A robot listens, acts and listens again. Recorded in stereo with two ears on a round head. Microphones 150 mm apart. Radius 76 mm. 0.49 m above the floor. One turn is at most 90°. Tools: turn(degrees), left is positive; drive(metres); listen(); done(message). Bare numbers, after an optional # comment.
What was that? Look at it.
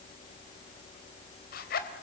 # The zipper: about 60° left or 120° left.
turn(60)
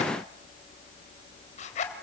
# So it is at 45° left.
turn(45)
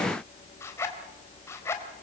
# The zipper is now 15° left.
turn(15)
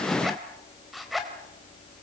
done("Found it: a zipper, straight ahead, 2 to 4 m away.")